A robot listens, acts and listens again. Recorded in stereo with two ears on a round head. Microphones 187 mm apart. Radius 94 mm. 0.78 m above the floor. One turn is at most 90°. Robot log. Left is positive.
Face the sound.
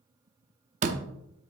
note: The door slam: about 35° right or 145° right.
cmd yaw -35
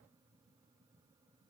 cmd idle
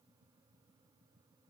end: I heard a door slam, but can't make it out now. It was about straight ahead or 110° right.